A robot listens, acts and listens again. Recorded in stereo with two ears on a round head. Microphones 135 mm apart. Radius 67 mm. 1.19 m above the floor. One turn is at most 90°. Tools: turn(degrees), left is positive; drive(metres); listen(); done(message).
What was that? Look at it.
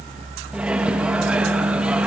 turn(degrees=-30)
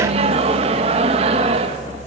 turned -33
turn(degrees=-90)
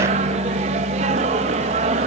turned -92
turn(degrees=-45)
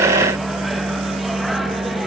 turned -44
done("Facing the microwave.")